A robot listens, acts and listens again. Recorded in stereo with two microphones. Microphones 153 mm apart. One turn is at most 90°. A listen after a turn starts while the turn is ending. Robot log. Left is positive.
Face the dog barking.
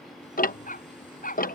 note: The dog barking: about 65° left or 115° left.
cmd yaw +65
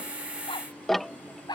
note: So it is at 30° left.
cmd yaw +30
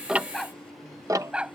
note: The dog barking is now 10° right.
cmd yaw -10
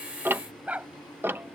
note: The dog barking is now 10° right.
cmd yaw -10
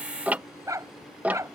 note: The dog barking is now 20° right.
cmd yaw -20
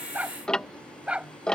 note: The dog barking is now 10° right.
cmd yaw -10
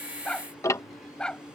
end: Found it: a dog barking, straight ahead.